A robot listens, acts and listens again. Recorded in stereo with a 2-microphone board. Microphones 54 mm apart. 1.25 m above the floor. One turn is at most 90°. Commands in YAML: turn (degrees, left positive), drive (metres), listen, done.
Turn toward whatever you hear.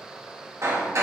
turn: -65
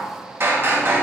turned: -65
turn: -50
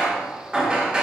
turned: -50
turn: -20
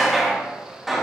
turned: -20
done: "Facing the hammering, 1 to 2 m away."